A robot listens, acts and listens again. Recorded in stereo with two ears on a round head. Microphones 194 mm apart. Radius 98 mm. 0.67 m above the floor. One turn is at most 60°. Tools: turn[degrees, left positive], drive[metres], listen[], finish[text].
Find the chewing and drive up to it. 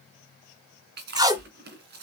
Thought: The chewing: about 45° right or 135° right.
Action: turn[-45]
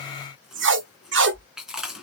Action: drive[1.0]
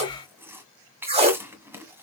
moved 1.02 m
Thought: The chewing is now 10° right.
Action: turn[-10]
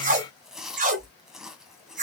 Action: drive[1.0]
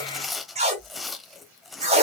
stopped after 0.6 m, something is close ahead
Action: finish[I am next to the chewing.]